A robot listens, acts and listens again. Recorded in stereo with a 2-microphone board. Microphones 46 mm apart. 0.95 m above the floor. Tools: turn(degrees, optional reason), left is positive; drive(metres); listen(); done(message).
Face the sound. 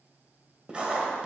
turn(degrees=-20, reason="The writing: about 20° right or 160° right.")
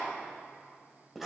done("Facing the writing.")